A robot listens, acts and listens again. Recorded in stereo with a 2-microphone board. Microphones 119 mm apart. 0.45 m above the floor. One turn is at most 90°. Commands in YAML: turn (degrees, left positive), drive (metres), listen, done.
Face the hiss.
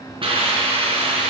turn: -50
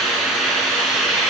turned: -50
done: "Found it: a hiss, straight ahead, over 4 m away."